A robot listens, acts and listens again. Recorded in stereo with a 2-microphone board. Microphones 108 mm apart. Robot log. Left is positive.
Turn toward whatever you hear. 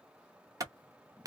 note: The clap: about 35° right or 145° right.
cmd yaw -35
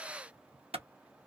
note: So it is at 115° right.
cmd yaw -115
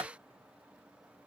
note: The clap is now 35° right.
cmd yaw -35
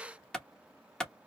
end: Found it: a clap, straight ahead.